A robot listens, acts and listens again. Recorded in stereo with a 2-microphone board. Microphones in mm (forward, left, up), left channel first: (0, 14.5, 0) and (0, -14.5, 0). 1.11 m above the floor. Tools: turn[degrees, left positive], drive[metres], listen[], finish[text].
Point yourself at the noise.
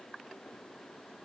Action: listen[]
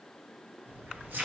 Action: turn[-90]
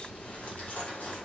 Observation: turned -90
Thought: So it is at 60° left.
Action: turn[60]
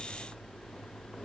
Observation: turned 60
Action: finish[Facing the keys jangling, 2 to 4 m away.]